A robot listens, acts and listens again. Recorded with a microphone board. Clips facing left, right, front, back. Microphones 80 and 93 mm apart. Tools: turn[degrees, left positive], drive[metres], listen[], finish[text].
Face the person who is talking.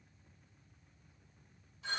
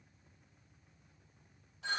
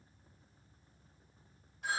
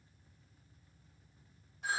Action: listen[]
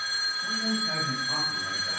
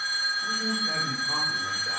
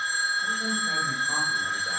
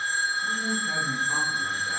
Thought: The man speaking: 60° right.
Action: turn[-60]
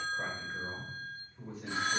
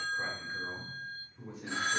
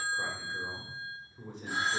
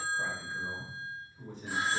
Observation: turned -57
Action: finish[Found it: a man speaking, straight ahead.]